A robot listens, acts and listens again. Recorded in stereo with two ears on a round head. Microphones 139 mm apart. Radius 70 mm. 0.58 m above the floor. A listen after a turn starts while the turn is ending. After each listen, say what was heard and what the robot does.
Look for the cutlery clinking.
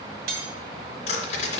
The cutlery clinking: about 70° right or 110° right. Turn 70° right.
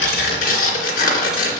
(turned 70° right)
Keep listening.
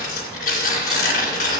Keep listening.
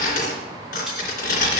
I heard cutlery clinking, but can't make it out now. It was about straight ahead or 40° right.